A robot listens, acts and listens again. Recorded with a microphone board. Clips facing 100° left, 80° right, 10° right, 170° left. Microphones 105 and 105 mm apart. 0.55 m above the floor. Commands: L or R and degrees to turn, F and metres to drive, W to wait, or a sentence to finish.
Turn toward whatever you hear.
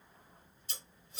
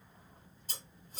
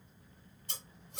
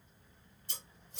R35
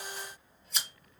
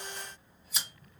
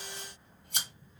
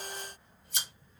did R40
Found it: scissors, straight ahead.